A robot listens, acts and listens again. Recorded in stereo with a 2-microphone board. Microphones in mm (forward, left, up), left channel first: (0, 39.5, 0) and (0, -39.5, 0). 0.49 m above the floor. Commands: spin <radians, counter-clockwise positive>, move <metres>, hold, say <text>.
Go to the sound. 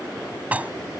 spin -0.35
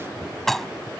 move 1.0
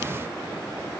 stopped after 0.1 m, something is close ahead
hold
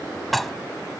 say Blocked. The dishes clattering is further on, straight ahead.